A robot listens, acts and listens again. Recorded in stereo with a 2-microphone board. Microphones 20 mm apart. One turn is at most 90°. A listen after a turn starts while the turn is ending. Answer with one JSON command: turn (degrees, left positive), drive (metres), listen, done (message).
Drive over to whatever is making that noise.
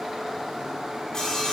{"turn": 30}
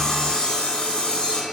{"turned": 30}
{"turn": 90}
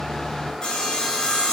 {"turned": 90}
{"turn": 50}
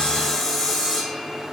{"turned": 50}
{"turn": 15}
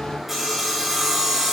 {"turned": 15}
{"drive": 1.0}
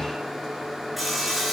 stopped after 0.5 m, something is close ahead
{"done": "Something is in my way. I am facing the sawing but have not reached it."}